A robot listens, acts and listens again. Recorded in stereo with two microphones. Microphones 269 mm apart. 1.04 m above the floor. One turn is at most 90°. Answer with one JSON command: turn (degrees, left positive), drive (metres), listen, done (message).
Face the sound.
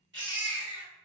{"turn": -45}
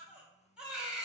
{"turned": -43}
{"done": "Found it: a baby crying, straight ahead."}